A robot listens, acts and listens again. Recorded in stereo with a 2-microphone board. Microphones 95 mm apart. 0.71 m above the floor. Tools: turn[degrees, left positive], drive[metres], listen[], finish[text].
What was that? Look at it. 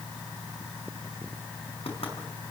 Thought: The knocking: about 75° left or 105° left.
Action: turn[75]
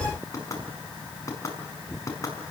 Thought: So it is at 30° left.
Action: turn[30]
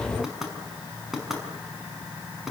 Action: finish[Found it: knocking, straight ahead.]